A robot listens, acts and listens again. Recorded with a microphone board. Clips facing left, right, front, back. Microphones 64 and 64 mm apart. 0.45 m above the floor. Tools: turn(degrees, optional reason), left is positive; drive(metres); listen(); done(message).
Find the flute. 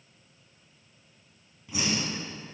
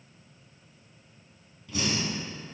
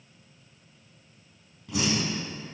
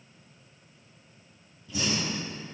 listen()
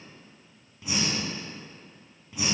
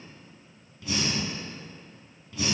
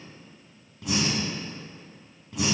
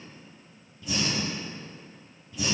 listen()
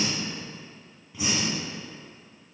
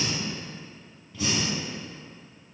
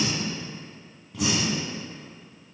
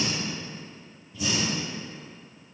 done("I can't make out a flute, only breathing.")